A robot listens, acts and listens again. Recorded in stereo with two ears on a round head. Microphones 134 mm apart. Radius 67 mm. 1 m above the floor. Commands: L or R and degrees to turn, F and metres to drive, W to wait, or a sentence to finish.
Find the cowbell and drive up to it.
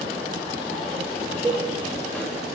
R30
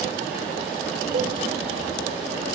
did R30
W
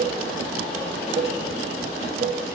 R135
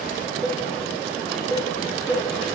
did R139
F1.0
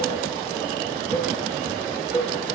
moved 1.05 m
L15
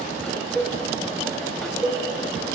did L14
F1.0
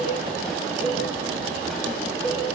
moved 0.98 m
F1.0
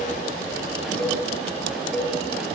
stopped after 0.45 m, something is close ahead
Arrived at the cowbell, straight ahead.